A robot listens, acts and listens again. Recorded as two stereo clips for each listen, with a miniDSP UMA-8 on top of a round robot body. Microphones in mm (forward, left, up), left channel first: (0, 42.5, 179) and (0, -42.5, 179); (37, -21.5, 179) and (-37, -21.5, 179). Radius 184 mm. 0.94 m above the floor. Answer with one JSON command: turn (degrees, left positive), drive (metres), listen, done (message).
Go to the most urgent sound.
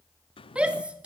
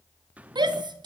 {"turn": -165}
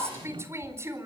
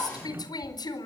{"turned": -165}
{"turn": -30}
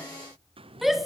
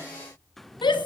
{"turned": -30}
{"drive": 1.0}
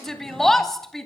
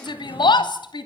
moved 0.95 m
{"drive": 1.0}
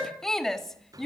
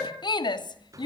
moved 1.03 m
{"drive": 1.0}
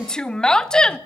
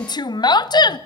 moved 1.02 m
{"turn": 10}
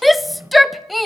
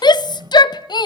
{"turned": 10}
{"drive": 1.0}
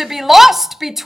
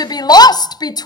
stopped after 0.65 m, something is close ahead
{"done": "I am next to the shout."}